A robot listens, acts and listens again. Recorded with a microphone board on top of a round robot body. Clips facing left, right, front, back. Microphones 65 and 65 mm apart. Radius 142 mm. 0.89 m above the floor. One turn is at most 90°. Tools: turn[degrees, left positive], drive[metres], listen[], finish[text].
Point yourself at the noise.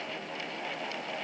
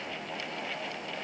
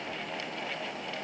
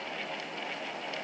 Action: listen[]
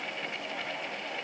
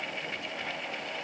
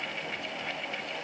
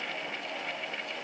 Action: listen[]
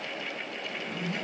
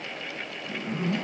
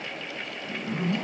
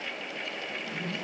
Thought: The zipper: 45° right.
Action: turn[-45]
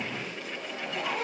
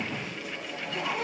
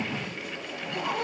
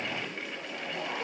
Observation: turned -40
Thought: The zipper is now 10° right.
Action: turn[-10]
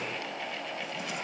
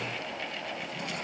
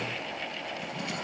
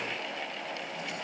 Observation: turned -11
Action: listen[]
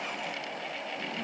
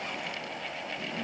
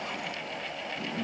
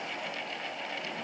Action: listen[]
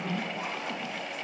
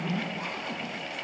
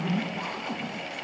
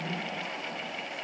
Action: finish[Facing the zipper.]